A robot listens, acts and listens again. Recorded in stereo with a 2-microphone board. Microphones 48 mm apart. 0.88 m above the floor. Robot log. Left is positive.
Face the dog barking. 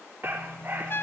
note: The dog barking: about 40° right or 140° right.
cmd yaw -40
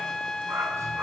note: So it is at 105° right.
cmd yaw -105
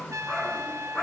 note: The dog barking is now 15° left.
cmd yaw +15
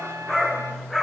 end: Found it: a dog barking, straight ahead, over 4 m away.